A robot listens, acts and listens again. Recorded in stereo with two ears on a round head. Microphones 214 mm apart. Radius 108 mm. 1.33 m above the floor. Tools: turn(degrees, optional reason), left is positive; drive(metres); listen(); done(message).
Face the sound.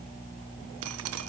turn(degrees=-70, reason="The dripping: about 70° right or 110° right.")
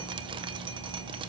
listen()
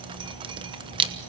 turn(degrees=-20, reason="So it is at 20° right.")
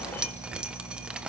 done("Found it: dripping, straight ahead, 1 to 2 m away.")